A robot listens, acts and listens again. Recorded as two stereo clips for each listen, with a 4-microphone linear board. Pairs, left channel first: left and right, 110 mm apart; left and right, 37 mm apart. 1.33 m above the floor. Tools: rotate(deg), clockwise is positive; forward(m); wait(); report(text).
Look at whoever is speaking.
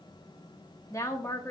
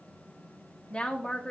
rotate(-25)
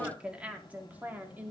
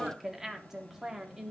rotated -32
rotate(15)
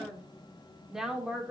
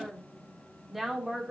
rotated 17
report("Found it: a woman speaking, straight ahead.")